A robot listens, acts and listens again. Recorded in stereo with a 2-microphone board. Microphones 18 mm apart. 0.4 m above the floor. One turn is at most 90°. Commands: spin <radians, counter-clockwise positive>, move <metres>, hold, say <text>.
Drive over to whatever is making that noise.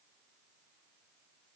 hold
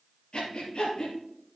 spin 1.22
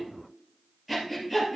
move 1.0
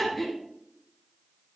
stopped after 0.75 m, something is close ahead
say Something is in my way. I am facing the breathing but have not reached it.